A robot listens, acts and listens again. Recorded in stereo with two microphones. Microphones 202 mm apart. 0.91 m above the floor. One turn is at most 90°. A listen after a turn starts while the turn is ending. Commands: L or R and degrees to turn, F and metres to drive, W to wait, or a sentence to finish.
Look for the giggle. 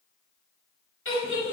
L90
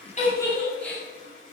Found it: a giggle, straight ahead, over 4 m away.